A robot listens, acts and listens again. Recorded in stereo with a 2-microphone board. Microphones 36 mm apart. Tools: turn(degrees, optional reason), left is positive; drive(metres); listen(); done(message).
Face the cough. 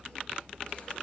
listen()
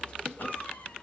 turn(degrees=60, reason="The cough: about 60° left or 120° left.")
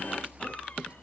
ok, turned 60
listen()
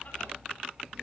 listen()
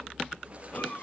turn(degrees=50, reason="So it is at 50° left.")
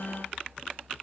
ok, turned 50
listen()
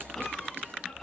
done("Found it: a cough, straight ahead, over 4 m away.")